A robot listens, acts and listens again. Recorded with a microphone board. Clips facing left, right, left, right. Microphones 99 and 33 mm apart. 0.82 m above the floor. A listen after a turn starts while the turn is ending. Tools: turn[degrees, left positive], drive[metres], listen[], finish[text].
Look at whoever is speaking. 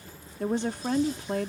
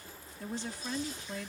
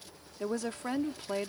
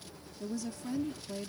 Thought: The woman speaking: about 60° left or 120° left.
Action: turn[60]
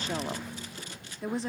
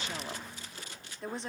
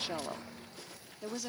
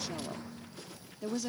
Action: finish[Found it: a woman speaking, straight ahead.]